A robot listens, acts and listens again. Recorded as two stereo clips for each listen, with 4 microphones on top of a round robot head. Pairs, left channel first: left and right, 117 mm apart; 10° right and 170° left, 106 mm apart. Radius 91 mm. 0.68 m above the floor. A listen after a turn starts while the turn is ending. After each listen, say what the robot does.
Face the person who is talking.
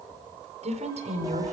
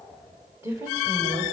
Turn 115° right.
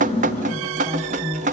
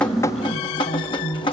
Turn 20° right.
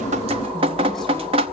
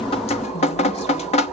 Keep listening.
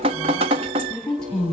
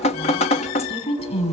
Facing the woman speaking.